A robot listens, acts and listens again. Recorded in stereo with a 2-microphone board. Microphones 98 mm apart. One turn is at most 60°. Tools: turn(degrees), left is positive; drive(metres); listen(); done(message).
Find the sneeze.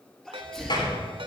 turn(degrees=30)
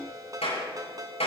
listen()
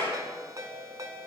done("I heard a sneeze, but can't make it out now. It was about 25° right or 145° left.")